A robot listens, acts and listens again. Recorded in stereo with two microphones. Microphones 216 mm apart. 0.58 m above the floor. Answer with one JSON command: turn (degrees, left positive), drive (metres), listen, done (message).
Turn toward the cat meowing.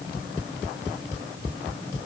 {"listen": true}
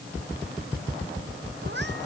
{"turn": -55}
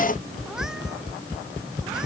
{"listen": true}
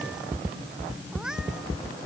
{"done": "Found it: a cat meowing, straight ahead."}